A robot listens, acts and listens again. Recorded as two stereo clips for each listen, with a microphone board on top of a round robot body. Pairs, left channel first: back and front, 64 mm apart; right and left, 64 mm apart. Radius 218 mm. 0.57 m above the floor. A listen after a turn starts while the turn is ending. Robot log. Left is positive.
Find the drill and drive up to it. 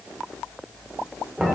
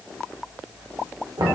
cmd idle
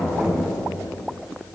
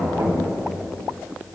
cmd idle
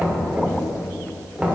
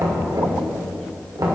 end: I can't make out a drill, only knocking.